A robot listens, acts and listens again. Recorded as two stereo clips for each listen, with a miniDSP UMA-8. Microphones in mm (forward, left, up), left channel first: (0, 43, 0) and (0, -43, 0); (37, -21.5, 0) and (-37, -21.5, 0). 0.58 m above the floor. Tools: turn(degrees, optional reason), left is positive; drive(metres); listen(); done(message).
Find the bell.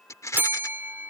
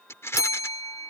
turn(degrees=-25, reason="The bell: 25° right.")
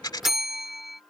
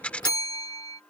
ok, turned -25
done("Facing the bell.")